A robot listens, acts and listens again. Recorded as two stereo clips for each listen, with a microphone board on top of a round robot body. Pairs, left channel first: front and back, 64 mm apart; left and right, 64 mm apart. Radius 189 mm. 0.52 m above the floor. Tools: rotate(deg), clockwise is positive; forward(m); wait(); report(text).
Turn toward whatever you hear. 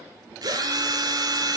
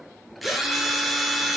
rotate(-180)
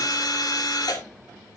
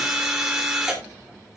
rotate(10)
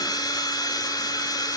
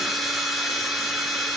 report("Found it: a drill, straight ahead, 2 to 4 m away.")